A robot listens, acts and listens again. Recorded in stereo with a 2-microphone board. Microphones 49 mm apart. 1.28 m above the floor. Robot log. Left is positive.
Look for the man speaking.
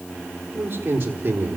note: The man speaking: about 40° right or 140° right.
cmd yaw -40
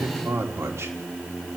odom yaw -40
note: So it is at 110° right.
cmd yaw -110
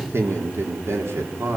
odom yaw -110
note: The man speaking is now 70° right.
cmd yaw -70
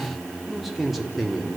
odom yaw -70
end: Facing the man speaking.